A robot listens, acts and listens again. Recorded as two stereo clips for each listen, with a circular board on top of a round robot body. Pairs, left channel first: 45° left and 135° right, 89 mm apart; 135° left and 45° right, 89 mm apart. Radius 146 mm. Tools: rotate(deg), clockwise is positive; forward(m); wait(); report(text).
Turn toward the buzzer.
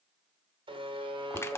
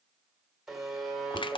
rotate(130)
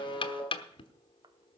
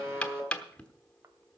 rotate(-20)
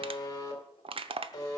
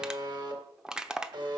report("Facing the buzzer.")